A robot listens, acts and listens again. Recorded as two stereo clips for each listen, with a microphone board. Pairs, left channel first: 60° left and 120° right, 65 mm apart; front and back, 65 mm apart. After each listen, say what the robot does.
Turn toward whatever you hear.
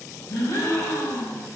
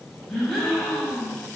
Turn 85° left.
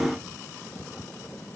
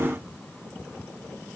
Facing where the gasp came from. I can't hear it now.